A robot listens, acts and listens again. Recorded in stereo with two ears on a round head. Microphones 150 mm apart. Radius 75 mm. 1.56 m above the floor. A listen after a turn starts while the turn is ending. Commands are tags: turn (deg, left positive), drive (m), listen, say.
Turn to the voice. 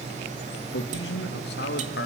<turn deg="70"/>
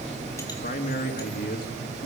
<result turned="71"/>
<turn deg="55"/>
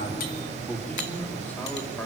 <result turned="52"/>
<listen/>
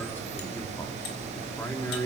<turn deg="15"/>
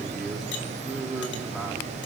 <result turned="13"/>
<say>Found it: a man speaking, straight ahead.</say>